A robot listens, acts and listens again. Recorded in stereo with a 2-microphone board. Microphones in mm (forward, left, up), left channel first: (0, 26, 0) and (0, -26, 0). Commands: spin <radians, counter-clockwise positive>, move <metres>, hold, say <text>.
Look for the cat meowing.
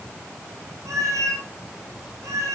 spin -1.57
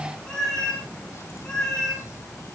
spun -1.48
spin 0.17
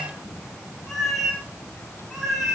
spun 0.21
say Facing the cat meowing.